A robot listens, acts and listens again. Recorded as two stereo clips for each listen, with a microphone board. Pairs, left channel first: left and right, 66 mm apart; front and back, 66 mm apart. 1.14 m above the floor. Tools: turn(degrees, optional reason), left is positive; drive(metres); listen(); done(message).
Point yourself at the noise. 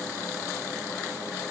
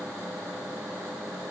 listen()
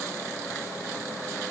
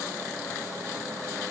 listen()
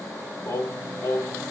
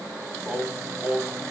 turn(degrees=130, reason="The singing: 130° left.")
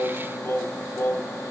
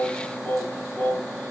turn(degrees=65, reason="The singing is now 65° left.")
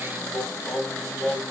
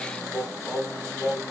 done("Facing the singing, 1 to 2 m away.")